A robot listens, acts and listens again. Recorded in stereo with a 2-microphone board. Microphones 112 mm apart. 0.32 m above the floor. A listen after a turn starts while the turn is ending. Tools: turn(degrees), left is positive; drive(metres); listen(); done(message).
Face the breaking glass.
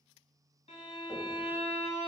listen()
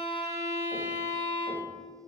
listen()
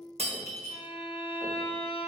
turn(degrees=-70)
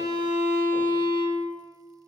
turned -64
listen()
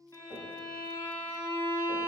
done("I heard breaking glass, but can't make it out now. It was about 10° right or 45° right.")